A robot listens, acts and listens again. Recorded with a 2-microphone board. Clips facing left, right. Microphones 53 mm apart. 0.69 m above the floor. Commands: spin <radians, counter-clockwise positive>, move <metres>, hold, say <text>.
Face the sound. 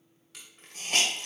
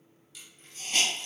spin 1.57
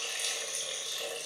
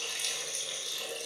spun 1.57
spin 0.17
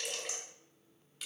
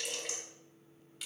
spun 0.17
say Found it: a hiss, straight ahead, 1 to 2 m away.